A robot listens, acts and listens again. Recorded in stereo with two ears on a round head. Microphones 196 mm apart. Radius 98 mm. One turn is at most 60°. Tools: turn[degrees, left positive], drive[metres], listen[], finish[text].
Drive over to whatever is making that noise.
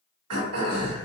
Action: turn[-60]
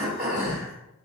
Thought: So it is at 40° right.
Action: turn[-40]
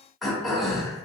Action: drive[1.0]
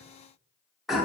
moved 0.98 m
Action: drive[1.0]
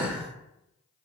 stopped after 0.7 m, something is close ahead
Thought: The throat clearing is now 10° right.
Action: turn[-10]
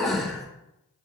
Action: finish[I am next to the throat clearing.]